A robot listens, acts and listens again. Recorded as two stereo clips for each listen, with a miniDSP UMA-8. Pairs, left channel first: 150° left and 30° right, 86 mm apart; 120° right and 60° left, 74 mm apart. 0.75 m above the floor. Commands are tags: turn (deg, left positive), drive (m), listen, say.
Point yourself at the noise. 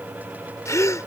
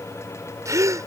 <turn deg="100"/>
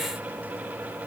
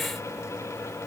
<say>Facing where the gasp came from. I can't hear it now.</say>